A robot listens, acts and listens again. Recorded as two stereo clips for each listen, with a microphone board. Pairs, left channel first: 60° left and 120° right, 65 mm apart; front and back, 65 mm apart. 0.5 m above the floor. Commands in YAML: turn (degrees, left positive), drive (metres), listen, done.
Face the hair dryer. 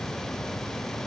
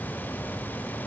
listen: true
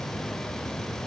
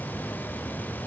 listen: true
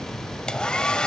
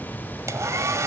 turn: 140
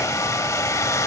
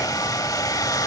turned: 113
turn: 25
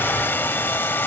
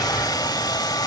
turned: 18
done: "Facing the hair dryer."